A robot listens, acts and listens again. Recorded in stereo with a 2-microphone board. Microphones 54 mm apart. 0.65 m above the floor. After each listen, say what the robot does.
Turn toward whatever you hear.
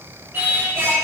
Turn 45° right.
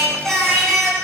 Turn 10° left.
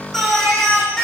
Turn 10° left.
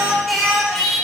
Facing the singing, over 4 m away.